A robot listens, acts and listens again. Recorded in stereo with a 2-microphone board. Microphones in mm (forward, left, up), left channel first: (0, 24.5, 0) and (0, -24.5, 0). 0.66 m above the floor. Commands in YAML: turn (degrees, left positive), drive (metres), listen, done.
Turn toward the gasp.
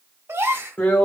turn: -70
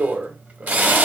listen: true
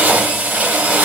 done: "I heard a gasp, but can't make it out now. It was about straight ahead or 40° right."